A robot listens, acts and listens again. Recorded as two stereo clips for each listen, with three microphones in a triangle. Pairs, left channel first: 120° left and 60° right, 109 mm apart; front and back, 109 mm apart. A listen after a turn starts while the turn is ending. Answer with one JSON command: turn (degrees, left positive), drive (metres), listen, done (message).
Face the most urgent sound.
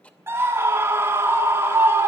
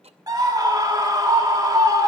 {"turn": -125}
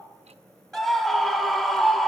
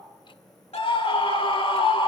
{"turn": 30}
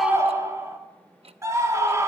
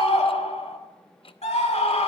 {"done": "Found it: a scream, straight ahead, 2 to 4 m away."}